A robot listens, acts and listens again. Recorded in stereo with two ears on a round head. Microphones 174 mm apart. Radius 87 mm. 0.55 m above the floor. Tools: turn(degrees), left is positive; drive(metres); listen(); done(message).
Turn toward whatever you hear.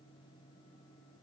listen()
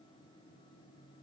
listen()
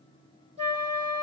turn(degrees=-30)
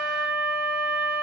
done("Facing the flute, 2 to 4 m away.")